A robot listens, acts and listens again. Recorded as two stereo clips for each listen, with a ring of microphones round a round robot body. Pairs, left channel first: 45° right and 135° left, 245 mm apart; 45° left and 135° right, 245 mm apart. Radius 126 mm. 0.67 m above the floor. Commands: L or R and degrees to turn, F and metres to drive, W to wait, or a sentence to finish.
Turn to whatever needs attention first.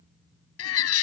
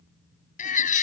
R15
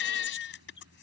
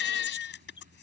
Found it: a baby crying, straight ahead.